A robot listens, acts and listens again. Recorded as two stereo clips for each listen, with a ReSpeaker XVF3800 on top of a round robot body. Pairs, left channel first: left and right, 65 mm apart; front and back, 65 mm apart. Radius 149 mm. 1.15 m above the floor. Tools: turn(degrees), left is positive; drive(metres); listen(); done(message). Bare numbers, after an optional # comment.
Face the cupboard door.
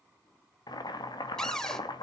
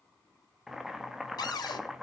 # The cupboard door: 10° left.
turn(10)
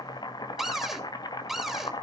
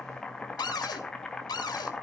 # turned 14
done("Found it: a cupboard door, straight ahead.")